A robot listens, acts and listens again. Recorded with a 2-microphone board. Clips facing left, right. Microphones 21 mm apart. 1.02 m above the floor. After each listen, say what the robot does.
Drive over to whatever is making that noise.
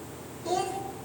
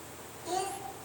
Turn 35° left.
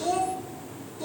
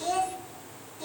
Drive 1.0 m forward.
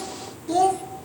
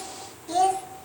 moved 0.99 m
Drive 1.0 m forward.
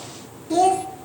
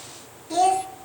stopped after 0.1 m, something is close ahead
Arrived at the child speaking, straight ahead.